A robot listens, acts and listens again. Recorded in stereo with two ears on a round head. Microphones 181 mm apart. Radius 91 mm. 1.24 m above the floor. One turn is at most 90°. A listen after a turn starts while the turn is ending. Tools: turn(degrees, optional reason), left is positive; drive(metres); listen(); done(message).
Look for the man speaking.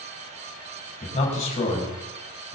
turn(degrees=35, reason="The man speaking: about 35° left or 145° left.")
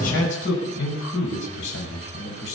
turn(degrees=90, reason="So it is at 115° left.")
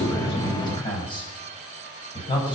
turn(degrees=25, reason="The man speaking is now 25° left.")
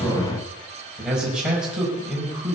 done("Facing the man speaking, over 4 m away.")